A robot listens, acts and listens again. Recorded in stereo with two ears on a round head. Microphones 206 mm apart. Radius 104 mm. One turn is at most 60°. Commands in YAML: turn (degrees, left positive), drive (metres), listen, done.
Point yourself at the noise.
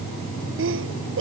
turn: -60
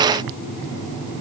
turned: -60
listen: true
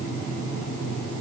done: "I heard a sneeze, but can't make it out now. It was about 5° right or 55° right."